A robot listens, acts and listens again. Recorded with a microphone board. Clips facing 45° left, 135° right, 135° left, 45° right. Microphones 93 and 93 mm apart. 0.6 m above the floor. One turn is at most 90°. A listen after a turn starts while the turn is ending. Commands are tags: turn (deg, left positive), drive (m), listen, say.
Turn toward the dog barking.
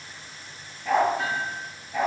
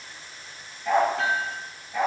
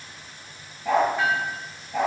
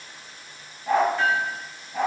<turn deg="90"/>
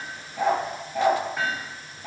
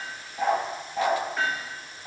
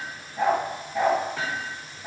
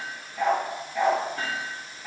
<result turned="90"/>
<turn deg="65"/>
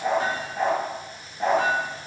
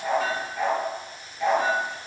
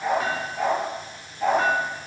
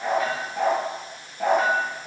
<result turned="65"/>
<turn deg="-10"/>
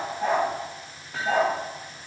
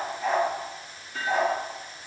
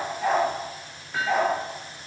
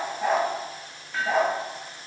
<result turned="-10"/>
<say>Found it: a dog barking, straight ahead.</say>